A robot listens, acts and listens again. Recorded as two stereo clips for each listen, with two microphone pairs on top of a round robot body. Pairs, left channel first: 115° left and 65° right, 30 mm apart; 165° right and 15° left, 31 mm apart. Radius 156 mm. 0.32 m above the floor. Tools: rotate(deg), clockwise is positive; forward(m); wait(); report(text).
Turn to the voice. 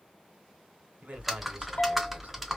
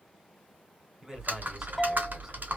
rotate(50)
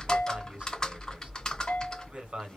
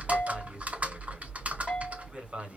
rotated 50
rotate(20)
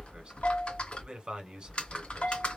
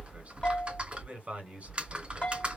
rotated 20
report("Found it: a man speaking, straight ahead, 2 to 4 m away.")